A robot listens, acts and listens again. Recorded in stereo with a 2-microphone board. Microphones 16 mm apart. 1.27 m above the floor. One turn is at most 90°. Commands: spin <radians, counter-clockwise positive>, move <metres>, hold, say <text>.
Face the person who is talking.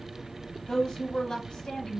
spin 0.79
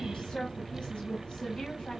spin 1.57
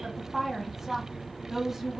spin -0.35
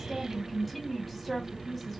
say Facing the woman speaking, 1 to 2 m away.